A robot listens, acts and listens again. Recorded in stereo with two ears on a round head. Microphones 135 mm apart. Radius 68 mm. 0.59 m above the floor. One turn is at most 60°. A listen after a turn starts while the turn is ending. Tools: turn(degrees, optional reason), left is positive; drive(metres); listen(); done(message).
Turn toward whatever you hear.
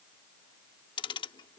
turn(degrees=30, reason="The ticking: about 30° left or 150° left.")
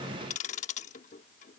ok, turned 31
turn(degrees=60, reason="So it is at 110° left.")
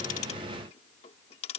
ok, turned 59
turn(degrees=50, reason="The ticking is now 50° left.")
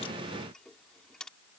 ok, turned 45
done("Facing the ticking.")